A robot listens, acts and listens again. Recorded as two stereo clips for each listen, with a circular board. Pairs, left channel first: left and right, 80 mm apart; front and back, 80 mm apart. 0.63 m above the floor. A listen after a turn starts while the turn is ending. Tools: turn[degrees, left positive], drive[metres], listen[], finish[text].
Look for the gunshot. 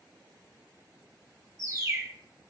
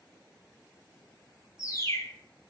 Action: listen[]
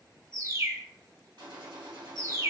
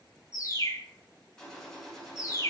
Thought: The gunshot: 80° right.
Action: turn[-80]
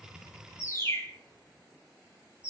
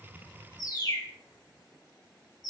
Action: finish[Facing where the gunshot came from. I can't hear it now.]